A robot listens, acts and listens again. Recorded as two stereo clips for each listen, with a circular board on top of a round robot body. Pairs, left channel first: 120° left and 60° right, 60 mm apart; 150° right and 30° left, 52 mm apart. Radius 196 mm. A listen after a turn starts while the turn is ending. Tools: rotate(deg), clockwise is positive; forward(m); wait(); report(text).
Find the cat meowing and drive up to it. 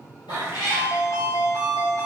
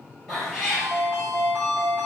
rotate(-130)
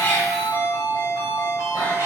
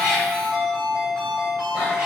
wait()
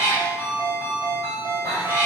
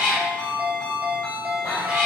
forward(1.0)
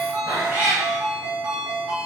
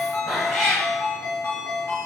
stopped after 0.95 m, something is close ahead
rotate(10)
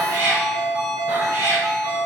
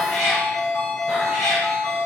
report("Arrived at the cat meowing, straight ahead.")